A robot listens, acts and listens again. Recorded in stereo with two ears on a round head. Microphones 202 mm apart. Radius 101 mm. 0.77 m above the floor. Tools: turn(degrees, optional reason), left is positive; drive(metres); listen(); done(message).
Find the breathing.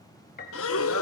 turn(degrees=65, reason="The breathing: about 65° left or 115° left.")
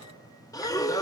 turn(degrees=15, reason="So it is at 15° left.")
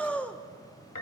done("Facing the breathing.")